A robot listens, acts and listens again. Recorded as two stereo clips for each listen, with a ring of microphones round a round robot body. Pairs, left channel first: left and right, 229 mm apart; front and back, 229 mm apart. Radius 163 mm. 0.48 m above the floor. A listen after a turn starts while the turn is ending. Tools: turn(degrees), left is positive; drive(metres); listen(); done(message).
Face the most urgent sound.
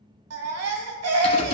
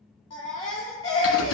turn(degrees=-75)
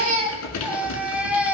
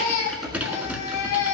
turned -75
done("Facing the baby crying.")